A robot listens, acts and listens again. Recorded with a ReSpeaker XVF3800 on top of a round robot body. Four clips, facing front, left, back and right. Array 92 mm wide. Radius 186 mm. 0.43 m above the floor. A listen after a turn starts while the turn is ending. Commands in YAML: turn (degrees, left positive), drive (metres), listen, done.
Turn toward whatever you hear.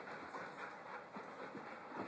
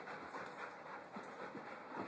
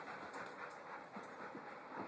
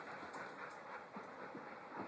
listen: true
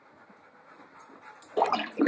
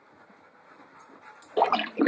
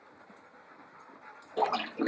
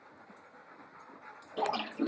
turn: 65
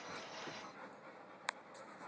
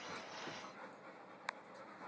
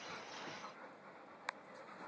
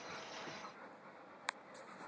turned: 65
done: "Facing where the splash came from. I can't hear it now."